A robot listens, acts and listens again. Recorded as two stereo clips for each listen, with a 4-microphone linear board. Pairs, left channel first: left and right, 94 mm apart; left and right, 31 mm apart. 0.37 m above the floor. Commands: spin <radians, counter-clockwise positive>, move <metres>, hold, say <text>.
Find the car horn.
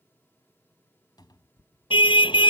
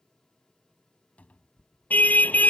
spin 1.05
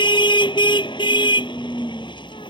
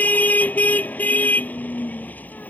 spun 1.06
spin 1.05
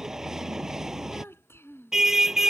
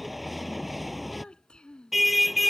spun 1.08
say Facing the car horn.